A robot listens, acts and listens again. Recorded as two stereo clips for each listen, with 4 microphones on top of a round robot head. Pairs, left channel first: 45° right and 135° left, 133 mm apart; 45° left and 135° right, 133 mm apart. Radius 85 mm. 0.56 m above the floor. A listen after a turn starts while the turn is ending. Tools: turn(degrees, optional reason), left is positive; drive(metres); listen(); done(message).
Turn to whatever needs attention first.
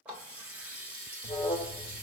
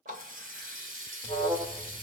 turn(degrees=-85, reason="The alarm: 85° right.")
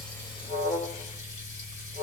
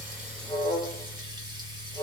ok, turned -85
turn(degrees=-15, reason="The alarm is now 15° right.")
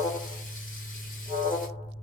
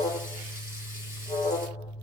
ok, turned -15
done("Facing the alarm, 2 to 4 m away.")